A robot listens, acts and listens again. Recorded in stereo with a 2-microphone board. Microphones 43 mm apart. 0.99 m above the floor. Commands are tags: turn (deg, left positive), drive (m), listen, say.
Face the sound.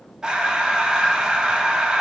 <turn deg="-15"/>
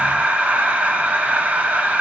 <turn deg="-145"/>
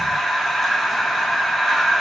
<say>Facing the breathing.</say>